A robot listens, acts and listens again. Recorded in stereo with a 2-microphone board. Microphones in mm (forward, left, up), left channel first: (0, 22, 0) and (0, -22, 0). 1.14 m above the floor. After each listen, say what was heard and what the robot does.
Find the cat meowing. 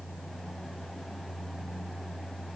Keep listening.
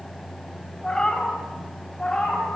The cat meowing: about 20° left or 160° left. Turn 20° left.
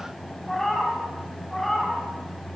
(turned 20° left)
Turn 30° left.
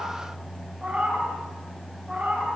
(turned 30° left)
So it is at 25° right. Turn 25° right.
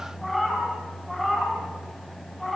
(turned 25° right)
Found it: a cat meowing, straight ahead.